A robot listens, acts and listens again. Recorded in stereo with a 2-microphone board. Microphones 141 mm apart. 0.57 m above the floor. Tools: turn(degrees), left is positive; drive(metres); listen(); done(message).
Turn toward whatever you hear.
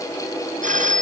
turn(degrees=-90)
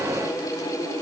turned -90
listen()
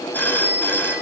turn(degrees=15)
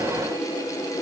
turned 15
listen()
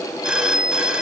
done("Found it: a phone ringing, straight ahead, over 4 m away.")